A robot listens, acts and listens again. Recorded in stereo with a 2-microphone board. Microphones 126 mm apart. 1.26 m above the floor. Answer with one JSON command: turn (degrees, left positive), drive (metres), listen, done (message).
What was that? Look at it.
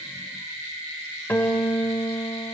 {"turn": 15}
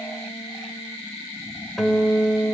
{"done": "Found it: a guitar, straight ahead, 2 to 4 m away."}